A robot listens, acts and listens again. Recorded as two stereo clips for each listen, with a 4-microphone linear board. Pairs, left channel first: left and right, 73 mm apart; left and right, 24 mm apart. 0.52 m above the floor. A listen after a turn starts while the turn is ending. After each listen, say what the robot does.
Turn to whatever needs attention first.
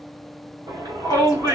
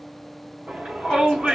Turn 60° right.
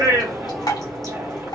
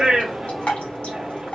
Turn 40° right.
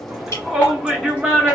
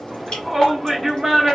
Facing the shout.